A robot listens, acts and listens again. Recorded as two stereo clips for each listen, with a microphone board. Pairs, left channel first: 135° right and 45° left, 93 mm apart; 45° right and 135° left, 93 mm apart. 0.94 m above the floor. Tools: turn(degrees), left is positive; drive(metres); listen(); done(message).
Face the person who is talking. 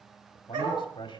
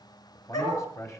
turn(degrees=-100)
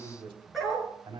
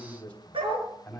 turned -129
turn(degrees=30)
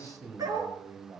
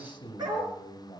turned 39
turn(degrees=-10)
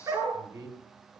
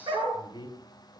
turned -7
done("Found it: a man speaking, straight ahead, 2 to 4 m away.")